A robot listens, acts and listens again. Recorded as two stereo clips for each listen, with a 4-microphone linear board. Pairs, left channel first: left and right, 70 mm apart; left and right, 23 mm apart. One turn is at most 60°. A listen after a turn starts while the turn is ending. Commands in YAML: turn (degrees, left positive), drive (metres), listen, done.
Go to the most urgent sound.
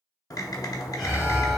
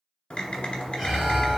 turn: 30
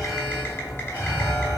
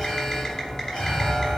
turn: 60
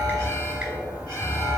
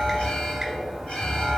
turn: 60
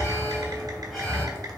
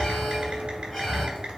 drive: 1.0
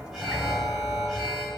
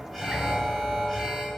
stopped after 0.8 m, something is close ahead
done: "I am next to the alarm."